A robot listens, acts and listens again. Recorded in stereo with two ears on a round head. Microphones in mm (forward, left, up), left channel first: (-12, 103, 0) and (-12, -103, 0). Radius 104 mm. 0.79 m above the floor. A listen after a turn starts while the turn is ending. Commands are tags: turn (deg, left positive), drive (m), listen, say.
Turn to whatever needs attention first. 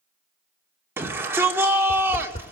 <turn deg="-30"/>
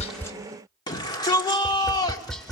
<turn deg="20"/>
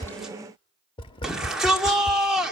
<say>Found it: a shout, straight ahead.</say>